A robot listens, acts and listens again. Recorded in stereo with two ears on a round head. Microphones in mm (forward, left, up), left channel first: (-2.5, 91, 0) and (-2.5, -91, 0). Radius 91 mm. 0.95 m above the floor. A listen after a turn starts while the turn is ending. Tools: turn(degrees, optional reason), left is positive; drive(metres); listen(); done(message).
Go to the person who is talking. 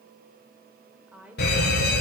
turn(degrees=-30)
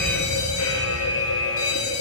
listen()
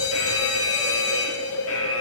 listen()
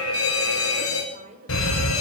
turn(degrees=-145, reason="So it is at 145° right.")
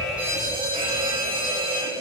listen()
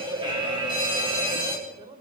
turn(degrees=-25, reason="The woman speaking is now 25° right.")
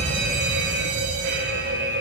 listen()
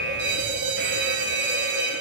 listen()
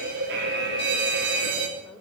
done("I heard a woman speaking from this way, but can't make it out now. I did not reach it.")